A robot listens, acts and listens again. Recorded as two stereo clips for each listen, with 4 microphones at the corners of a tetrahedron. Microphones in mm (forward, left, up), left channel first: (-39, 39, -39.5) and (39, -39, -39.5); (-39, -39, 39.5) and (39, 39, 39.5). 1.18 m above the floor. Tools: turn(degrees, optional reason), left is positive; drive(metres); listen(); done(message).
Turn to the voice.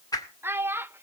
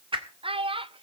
turn(degrees=25, reason="The child speaking: 25° left.")
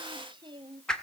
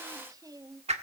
done("Found it: a child speaking, straight ahead.")